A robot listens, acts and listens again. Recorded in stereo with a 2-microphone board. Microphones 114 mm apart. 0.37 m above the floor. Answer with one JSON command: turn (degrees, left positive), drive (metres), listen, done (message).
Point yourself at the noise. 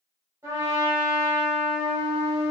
{"turn": -30}
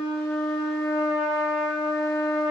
{"done": "Found it: a trumpet, straight ahead, 1 to 2 m away."}